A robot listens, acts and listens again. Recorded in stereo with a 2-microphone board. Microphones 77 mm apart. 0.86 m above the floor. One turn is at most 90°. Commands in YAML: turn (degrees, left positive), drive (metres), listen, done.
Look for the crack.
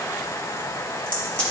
turn: 15
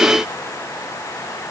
listen: true
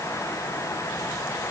done: "I heard a crack, but can't make it out now. It was about straight ahead or 150° left."